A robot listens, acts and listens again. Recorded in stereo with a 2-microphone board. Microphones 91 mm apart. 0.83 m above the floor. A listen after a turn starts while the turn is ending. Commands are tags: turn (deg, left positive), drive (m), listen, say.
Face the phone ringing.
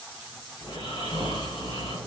<listen/>
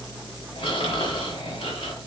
<listen/>
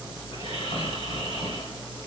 <say>I can't make out a phone ringing, only snoring.</say>